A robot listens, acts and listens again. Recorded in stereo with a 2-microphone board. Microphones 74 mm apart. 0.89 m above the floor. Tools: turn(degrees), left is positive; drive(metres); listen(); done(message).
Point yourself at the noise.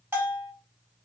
turn(degrees=-30)
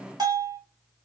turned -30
turn(degrees=-120)
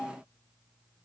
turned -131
turn(degrees=15)
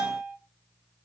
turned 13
done("Facing the bell, 1 to 2 m away.")